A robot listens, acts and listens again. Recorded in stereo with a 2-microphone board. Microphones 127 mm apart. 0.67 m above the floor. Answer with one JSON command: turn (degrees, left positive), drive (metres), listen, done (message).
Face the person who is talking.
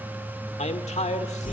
{"turn": 65}
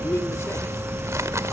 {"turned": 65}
{"turn": 25}
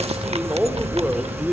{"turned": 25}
{"turn": -10}
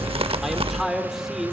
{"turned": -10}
{"done": "Found it: a man speaking, straight ahead, 2 to 4 m away."}